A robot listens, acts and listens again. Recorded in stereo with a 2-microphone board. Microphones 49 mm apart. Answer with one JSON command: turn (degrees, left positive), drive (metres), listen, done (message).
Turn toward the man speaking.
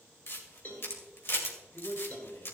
{"turn": 75}
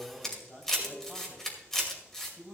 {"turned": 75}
{"turn": 25}
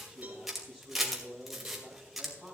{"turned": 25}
{"turn": 10}
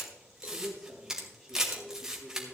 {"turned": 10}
{"done": "Found it: a man speaking, straight ahead, over 4 m away."}